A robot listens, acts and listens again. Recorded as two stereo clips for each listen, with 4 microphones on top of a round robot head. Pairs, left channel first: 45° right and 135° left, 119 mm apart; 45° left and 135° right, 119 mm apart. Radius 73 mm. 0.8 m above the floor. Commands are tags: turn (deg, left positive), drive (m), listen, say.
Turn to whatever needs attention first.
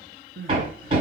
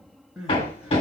<turn deg="140"/>
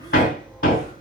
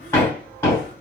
<listen/>
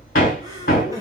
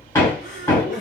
<turn deg="20"/>
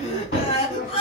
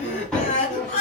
<say>Found it: crying, straight ahead.</say>